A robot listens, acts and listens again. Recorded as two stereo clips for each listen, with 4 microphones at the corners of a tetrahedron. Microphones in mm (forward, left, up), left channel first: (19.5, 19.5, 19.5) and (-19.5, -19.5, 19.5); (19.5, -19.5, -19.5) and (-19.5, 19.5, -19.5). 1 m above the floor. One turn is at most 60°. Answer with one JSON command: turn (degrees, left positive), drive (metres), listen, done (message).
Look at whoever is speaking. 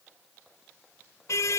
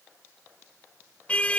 {"listen": true}
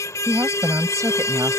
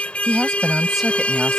{"turn": -60}
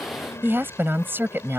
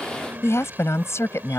{"turn": -60}
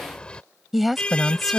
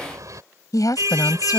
{"turn": -45}
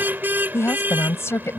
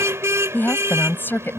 {"turn": 10}
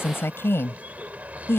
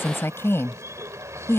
{"done": "Found it: a woman speaking, straight ahead."}